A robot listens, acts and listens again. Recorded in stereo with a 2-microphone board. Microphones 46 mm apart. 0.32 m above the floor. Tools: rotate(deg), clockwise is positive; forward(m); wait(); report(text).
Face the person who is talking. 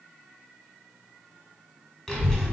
rotate(-30)
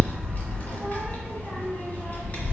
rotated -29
rotate(-135)
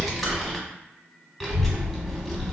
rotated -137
report("Found it: a child speaking, straight ahead, 1 to 2 m away.")